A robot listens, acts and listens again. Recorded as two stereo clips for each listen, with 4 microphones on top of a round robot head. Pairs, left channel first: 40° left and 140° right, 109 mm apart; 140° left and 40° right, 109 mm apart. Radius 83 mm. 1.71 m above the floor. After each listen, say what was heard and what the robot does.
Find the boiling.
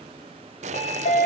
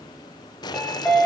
The boiling: 165° right. Turn 165° right.
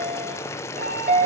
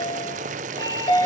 The boiling is now 30° right. Turn 30° right.
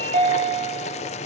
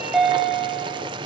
The boiling is now 10° left. Turn 10° left.
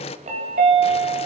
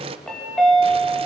Found it: boiling, straight ahead.